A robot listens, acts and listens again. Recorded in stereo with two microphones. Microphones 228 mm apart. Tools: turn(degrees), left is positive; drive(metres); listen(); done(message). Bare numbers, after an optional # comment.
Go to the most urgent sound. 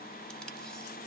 listen()
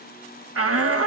turn(-90)
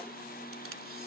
listen()
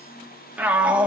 drive(1.0)
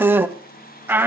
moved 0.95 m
# The shout is now 10° right.
turn(-10)
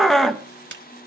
drive(1.0)
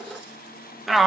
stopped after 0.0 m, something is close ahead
done("I am next to the shout.")